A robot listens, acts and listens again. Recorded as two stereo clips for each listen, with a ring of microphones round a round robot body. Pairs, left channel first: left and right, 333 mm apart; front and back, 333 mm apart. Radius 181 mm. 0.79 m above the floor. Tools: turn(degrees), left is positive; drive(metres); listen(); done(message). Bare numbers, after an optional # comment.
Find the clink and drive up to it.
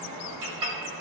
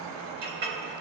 # The clink: 120° right.
turn(-120)
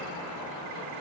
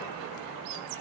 listen()
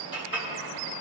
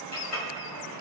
# The clink is now 15° left.
turn(15)
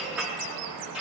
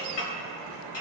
drive(1.0)
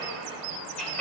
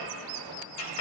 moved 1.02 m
drive(1.0)
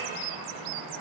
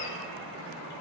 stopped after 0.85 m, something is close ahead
listen()
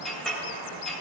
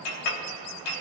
done("Arrived at the clink, straight ahead.")